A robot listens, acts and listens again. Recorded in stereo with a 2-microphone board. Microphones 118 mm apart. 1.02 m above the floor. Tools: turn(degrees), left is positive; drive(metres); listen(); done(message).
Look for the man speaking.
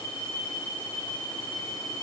listen()
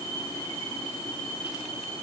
listen()
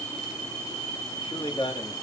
turn(degrees=45)
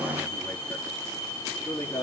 turn(degrees=25)
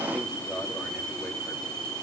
done("Facing the man speaking, 2 to 4 m away.")